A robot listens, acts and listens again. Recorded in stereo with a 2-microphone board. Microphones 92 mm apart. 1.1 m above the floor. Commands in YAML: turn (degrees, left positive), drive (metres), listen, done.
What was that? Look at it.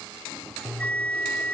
turn: 15
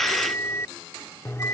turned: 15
turn: 150
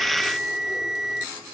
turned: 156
done: "Found it: a bell, straight ahead."